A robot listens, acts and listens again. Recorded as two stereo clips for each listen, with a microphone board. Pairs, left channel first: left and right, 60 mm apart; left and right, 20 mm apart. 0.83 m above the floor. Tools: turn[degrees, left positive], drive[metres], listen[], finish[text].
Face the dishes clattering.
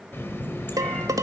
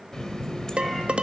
Thought: The dishes clattering: about 75° right or 105° right.
Action: turn[-75]
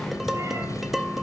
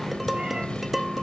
Action: finish[Facing the dishes clattering, 1 to 2 m away.]